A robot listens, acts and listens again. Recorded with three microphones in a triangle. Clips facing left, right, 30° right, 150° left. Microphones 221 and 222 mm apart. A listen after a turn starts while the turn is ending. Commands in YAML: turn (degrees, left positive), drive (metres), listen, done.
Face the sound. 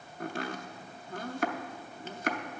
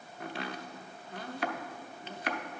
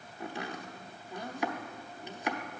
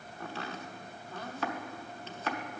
turn: 45
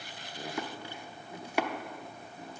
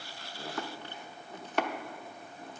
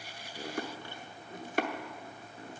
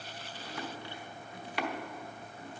turn: 10
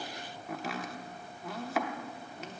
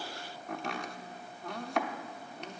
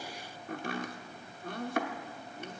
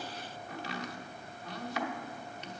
done: "Facing the chopping."